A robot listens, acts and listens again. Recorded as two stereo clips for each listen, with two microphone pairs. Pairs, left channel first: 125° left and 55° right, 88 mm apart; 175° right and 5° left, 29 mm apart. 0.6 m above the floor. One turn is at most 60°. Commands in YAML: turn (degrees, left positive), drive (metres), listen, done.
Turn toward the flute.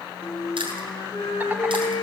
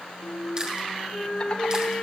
turn: 60
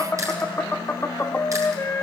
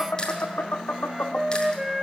turn: 60
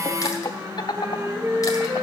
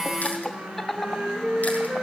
done: "Found it: a flute, straight ahead, 1 to 2 m away."